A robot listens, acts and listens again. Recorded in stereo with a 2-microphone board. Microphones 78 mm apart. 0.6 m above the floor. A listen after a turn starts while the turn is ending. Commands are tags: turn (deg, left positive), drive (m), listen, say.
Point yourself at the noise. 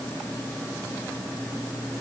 <listen/>
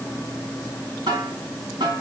<turn deg="-65"/>
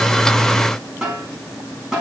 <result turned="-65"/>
<say>Facing the snare drum.</say>